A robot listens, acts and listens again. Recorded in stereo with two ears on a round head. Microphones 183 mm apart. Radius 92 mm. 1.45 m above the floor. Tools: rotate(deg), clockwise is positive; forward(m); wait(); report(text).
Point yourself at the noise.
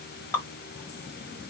rotate(-30)
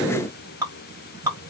rotate(15)
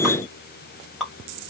report("Facing the dripping.")